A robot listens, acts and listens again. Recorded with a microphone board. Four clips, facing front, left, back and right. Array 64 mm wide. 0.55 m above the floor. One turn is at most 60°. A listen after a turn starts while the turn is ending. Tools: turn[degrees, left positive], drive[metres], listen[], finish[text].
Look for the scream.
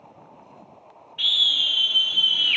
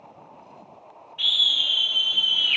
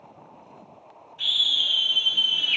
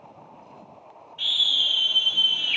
Thought: The scream: 10° left.
Action: turn[10]
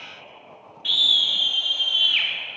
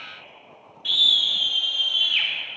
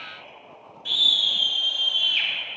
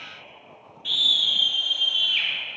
Action: finish[Facing the scream, 1 to 2 m away.]